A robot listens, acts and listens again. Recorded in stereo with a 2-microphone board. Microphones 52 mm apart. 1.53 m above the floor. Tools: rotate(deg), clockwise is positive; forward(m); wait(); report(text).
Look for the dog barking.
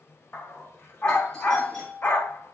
rotate(-45)
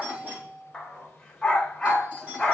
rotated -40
report("Found it: a dog barking, straight ahead.")